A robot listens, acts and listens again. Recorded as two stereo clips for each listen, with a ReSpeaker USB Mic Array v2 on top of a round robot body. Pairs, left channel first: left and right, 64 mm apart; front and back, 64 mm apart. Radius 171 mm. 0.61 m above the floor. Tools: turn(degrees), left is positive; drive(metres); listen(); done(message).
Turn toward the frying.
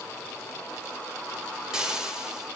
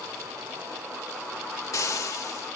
turn(degrees=-15)
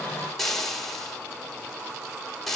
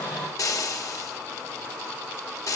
done("Found it: frying, straight ahead.")